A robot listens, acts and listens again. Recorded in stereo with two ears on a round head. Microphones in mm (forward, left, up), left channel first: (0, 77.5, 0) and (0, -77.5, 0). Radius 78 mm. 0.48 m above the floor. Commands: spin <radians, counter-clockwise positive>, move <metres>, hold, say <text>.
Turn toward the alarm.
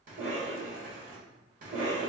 hold
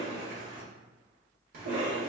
hold
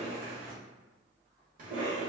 say I can't make out an alarm, only a cough.